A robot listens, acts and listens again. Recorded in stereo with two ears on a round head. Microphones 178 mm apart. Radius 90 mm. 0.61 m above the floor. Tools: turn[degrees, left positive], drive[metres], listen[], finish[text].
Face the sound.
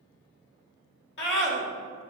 Thought: The scream: about 60° left or 120° left.
Action: turn[60]
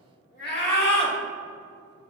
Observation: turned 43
Thought: So it is at 60° left.
Action: turn[60]
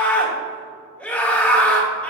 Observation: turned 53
Thought: The scream is now 10° left.
Action: turn[10]
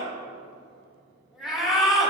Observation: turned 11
Action: finish[Facing the scream.]